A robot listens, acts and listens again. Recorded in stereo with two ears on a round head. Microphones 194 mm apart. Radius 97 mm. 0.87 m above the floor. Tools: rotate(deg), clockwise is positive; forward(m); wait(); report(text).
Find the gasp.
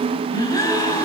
rotate(-15)
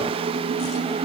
wait()
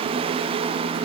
report("I heard a gasp, but can't make it out now. It was about straight ahead or 150° left.")